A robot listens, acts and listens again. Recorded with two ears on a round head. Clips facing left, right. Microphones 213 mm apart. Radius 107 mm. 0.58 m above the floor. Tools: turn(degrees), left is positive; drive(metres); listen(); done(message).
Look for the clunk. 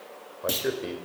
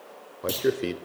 turn(degrees=30)
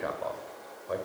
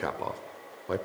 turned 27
listen()
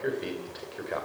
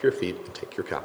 done("I heard a clunk, but can't make it out now. It was about 30° right or 155° left.")